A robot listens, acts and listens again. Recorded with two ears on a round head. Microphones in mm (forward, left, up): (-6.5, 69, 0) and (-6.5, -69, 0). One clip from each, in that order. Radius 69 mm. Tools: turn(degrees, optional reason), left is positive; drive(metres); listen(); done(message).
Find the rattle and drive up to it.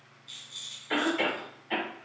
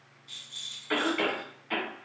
turn(degrees=30)
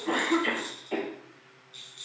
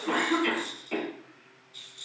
turn(degrees=135, reason="So it is at 135° left.")
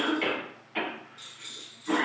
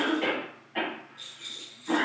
turn(degrees=10, reason="The rattle is now 10° left.")
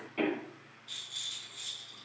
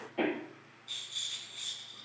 drive(metres=1.0)
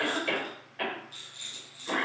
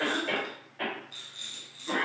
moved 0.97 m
drive(metres=1.0)
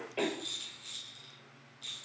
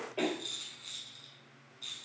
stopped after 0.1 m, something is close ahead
turn(degrees=10, reason="The rattle is now 10° left.")
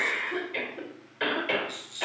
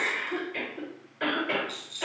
done("Arrived at the rattle, straight ahead.")